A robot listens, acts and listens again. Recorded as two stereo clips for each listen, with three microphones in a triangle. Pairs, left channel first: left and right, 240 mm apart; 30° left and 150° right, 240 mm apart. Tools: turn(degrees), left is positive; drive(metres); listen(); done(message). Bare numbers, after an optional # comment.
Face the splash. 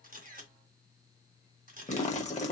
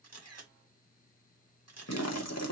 # The splash: 30° left.
turn(30)
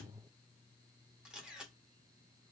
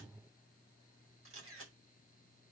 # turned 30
done("Facing where the splash came from. I can't hear it now.")